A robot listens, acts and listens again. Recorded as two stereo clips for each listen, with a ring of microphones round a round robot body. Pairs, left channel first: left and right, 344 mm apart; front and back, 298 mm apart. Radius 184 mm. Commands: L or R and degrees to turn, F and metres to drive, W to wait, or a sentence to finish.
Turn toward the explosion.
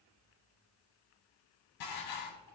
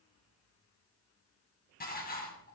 W
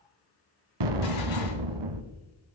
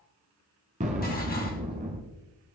R110
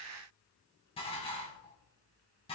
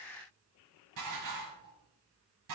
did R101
R10
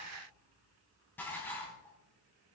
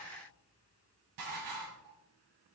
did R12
Facing where the explosion came from. I can't hear it now.